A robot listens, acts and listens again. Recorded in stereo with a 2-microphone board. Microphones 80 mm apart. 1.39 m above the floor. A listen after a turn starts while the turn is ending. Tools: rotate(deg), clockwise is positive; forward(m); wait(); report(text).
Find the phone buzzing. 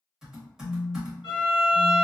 rotate(40)
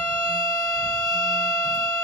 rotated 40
wait()
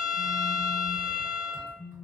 report("Found it: a phone buzzing, straight ahead, 1 to 2 m away.")